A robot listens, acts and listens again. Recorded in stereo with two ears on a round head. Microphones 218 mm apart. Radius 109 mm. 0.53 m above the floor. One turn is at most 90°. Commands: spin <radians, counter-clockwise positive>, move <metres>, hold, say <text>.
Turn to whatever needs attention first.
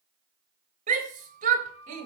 spin -0.61
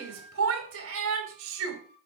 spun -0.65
spin -1.57
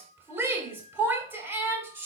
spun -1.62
spin -0.17
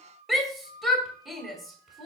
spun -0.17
say Found it: a shout, straight ahead, 2 to 4 m away.